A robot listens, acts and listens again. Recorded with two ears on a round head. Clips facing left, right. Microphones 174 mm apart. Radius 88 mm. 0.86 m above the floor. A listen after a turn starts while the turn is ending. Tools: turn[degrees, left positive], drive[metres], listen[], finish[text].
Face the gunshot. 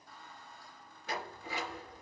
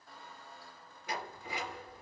Action: listen[]
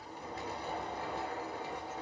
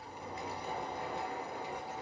Action: listen[]
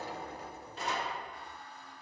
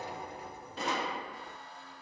Thought: The gunshot: about 60° right or 120° right.
Action: turn[-60]
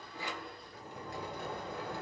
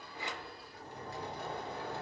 Action: listen[]
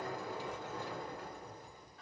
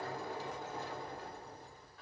Action: finish[I heard a gunshot, but can't make it out now. It was about straight ahead or 60° right.]